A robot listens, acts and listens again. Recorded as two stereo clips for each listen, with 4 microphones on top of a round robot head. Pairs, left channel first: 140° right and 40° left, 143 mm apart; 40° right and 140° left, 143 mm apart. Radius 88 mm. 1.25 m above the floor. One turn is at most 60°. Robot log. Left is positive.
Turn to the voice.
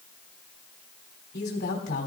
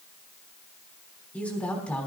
note: The woman speaking: 125° right.
cmd yaw -60
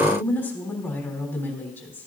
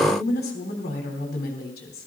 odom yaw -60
note: The woman speaking is now 65° right.
cmd yaw -60
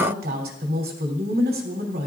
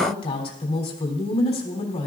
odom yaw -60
note: The woman speaking is now 10° left.
cmd yaw +10
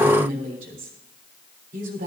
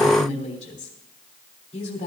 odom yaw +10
end: Found it: a woman speaking, straight ahead, 2 to 4 m away.